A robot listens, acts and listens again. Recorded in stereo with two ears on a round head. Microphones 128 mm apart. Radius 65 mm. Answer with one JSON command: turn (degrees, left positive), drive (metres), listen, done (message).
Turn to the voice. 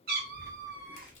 {"turn": -30}
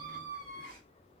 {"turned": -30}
{"turn": -120}
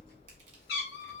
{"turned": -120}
{"turn": 30}
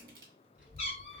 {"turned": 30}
{"turn": -10}
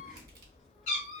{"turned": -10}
{"done": "Facing the child speaking."}